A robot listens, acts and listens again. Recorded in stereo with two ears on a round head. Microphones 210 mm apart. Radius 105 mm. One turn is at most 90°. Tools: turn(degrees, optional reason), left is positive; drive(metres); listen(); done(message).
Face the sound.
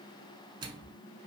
turn(degrees=-20, reason="The microwave: about 20° right or 160° right.")
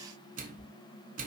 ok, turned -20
turn(degrees=-90, reason="So it is at 145° right.")
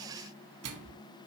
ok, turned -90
turn(degrees=-75, reason="The microwave is now 75° right.")
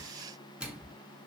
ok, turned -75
done("Facing the microwave.")